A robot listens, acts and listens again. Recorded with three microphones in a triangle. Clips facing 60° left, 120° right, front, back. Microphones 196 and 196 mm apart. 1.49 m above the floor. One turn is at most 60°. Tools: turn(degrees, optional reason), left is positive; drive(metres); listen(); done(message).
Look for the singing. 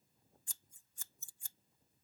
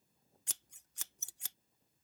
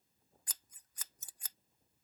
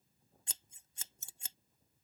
listen()
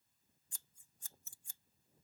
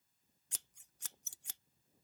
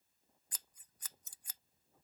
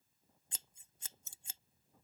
listen()
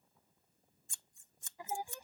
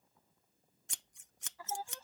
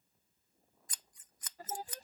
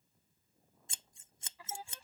turn(degrees=-10, reason="The singing: 10° right.")
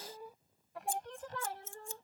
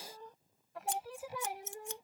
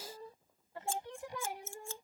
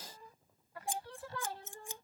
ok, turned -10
turn(degrees=-55, reason="The singing is now 55° right.")
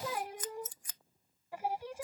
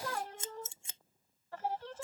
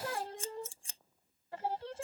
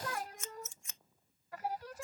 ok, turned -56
done("Found it: singing, straight ahead.")